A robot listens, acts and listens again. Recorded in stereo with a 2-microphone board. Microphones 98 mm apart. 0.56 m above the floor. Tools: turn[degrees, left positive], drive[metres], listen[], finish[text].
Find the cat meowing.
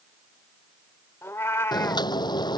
Thought: The cat meowing: about 25° left or 155° left.
Action: turn[25]
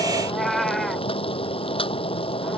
Action: finish[Facing the cat meowing.]